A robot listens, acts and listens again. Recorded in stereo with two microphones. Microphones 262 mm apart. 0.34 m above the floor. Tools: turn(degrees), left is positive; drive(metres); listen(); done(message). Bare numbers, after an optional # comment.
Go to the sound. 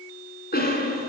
# The cough: about 35° left or 145° left.
turn(35)
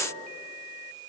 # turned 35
listen()
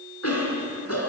# So it is at 105° left.
turn(105)
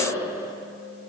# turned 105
# The cough is now 10° right.
turn(-10)
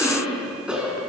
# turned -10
drive(1.0)
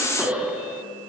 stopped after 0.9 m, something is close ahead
done("Blocked. The cough is further on, straight ahead.")